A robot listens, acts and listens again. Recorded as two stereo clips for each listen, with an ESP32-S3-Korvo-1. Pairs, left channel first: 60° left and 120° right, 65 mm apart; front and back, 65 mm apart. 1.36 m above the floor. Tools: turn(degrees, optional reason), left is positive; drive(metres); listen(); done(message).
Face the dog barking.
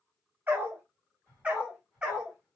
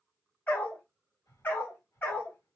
turn(degrees=-45, reason="The dog barking: 45° right.")
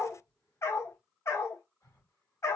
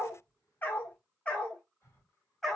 turn(degrees=85, reason="The dog barking is now 85° left.")
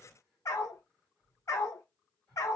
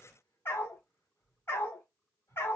turn(degrees=40, reason="The dog barking is now 40° left.")
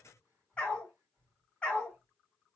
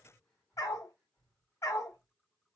turn(degrees=-15, reason="The dog barking is now 15° right.")
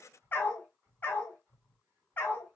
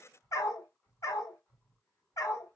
done("Found it: a dog barking, straight ahead, 1 to 2 m away.")